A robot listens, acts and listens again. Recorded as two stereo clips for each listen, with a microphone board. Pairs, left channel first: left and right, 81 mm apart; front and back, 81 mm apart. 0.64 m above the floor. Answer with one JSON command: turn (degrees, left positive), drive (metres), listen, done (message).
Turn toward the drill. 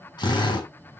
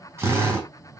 {"turn": 125}
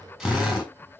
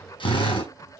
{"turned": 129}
{"done": "Found it: a drill, straight ahead, over 4 m away."}